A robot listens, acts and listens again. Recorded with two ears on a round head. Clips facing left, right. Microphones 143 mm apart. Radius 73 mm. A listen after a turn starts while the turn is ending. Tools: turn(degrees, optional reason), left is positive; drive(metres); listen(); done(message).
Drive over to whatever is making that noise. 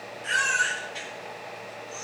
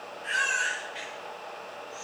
turn(degrees=55, reason="The baby crying: about 55° left or 125° left.")
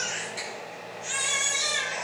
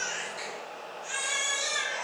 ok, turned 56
turn(degrees=70, reason="So it is at 70° left.")
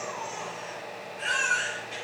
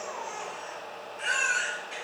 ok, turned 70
drive(metres=1.0)
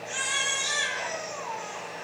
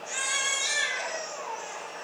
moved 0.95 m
turn(degrees=-10, reason="The baby crying is now 10° right.")
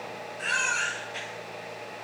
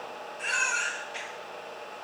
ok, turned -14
drive(metres=1.0)
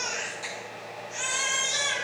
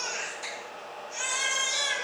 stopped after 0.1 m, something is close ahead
done("Something is in my way. I am facing the baby crying but have not reached it.")